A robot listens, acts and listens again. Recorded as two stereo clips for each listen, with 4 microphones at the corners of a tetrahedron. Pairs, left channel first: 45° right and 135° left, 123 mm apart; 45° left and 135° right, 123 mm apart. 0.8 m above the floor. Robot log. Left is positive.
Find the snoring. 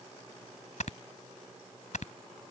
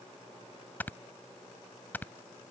note: The snoring: 30° right.
cmd yaw -30
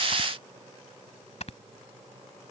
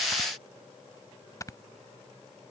note: The snoring is now 15° right.
cmd yaw -15
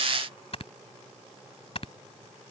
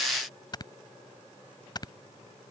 note: The snoring is now 10° right.
cmd yaw -10
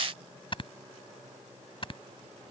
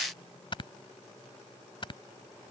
end: Found it: snoring, straight ahead.